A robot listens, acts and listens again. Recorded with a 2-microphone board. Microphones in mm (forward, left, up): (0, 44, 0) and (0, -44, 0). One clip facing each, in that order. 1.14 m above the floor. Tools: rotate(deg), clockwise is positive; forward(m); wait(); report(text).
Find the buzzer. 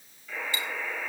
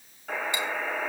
rotate(60)
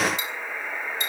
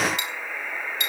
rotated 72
rotate(-10)
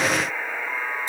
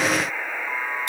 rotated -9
report("Found it: a buzzer, straight ahead, over 4 m away.")